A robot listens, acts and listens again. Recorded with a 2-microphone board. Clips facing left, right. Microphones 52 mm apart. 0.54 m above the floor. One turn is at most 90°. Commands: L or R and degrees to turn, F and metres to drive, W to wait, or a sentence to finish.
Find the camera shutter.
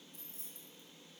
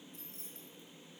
W
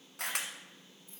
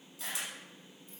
L65
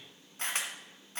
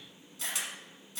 L45
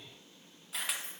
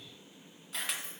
Facing the camera shutter, 1 to 2 m away.